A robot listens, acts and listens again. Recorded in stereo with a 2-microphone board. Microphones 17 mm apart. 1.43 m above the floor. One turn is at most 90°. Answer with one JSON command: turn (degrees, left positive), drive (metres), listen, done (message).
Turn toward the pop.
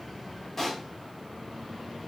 {"turn": 15}
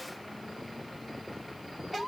{"listen": true}
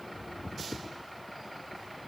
{"done": "I heard a pop, but can't make it out now. It was about straight ahead or 150° left."}